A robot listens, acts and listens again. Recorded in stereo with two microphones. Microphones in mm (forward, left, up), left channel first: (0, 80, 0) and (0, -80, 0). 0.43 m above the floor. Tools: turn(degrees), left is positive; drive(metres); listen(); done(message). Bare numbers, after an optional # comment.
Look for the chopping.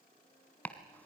turn(30)
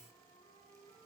listen()
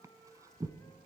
# So it is at 20° right.
turn(-20)
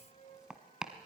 done("Found it: chopping, straight ahead, 1 to 2 m away.")